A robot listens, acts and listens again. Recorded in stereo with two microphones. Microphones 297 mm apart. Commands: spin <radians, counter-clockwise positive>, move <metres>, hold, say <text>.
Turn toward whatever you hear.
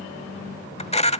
spin 0.35
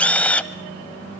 say Facing the camera shutter, under 1 m away.